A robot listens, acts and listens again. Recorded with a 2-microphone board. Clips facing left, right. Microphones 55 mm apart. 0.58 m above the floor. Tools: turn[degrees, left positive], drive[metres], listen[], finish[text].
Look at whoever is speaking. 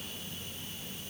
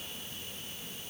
Action: listen[]
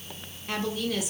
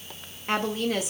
Thought: The woman speaking: about 35° right or 145° right.
Action: turn[-35]
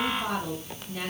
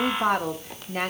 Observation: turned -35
Thought: So it is at 105° right.
Action: turn[-105]
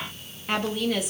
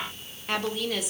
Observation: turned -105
Action: finish[Facing the woman speaking, 1 to 2 m away.]